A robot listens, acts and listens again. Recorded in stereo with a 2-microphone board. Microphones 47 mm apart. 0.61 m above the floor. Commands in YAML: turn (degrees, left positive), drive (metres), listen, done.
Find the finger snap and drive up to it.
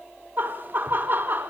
listen: true
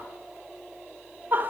listen: true
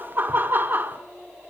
done: "I can't make out a finger snap, only laughter."